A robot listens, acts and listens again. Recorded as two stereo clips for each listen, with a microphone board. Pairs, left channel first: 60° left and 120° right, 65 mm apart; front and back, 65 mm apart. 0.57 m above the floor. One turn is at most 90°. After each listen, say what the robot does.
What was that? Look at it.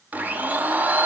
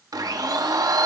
Turn 90° left.
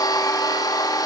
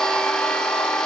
Turn 80° left.
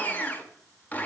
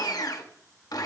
Facing the blender, under 1 m away.